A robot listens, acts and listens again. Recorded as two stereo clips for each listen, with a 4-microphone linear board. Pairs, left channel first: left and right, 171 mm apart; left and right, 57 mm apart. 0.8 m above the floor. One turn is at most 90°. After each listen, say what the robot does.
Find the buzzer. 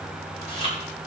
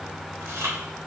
Keep listening.
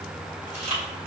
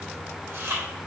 Keep listening.
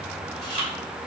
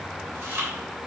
I can't make out a buzzer to turn to.